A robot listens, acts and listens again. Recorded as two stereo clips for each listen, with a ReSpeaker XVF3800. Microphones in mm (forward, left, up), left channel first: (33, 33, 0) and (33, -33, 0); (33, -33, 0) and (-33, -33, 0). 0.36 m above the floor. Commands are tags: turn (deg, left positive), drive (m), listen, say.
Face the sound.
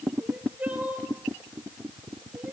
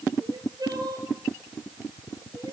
<turn deg="-160"/>
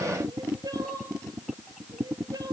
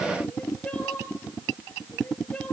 <turn deg="-70"/>
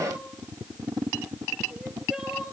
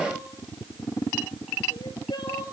<turn deg="-10"/>
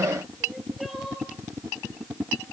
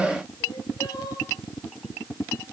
<say>Found it: crying, straight ahead.</say>